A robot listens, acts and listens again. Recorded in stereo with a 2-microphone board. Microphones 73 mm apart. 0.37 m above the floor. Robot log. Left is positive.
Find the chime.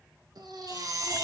note: The chime: about 60° right or 120° right.
cmd yaw -60
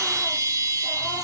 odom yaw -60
note: So it is at 50° right.
cmd yaw -50
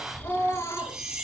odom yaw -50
note: The chime is now 10° right.
cmd yaw -10
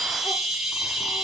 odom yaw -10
end: Facing the chime.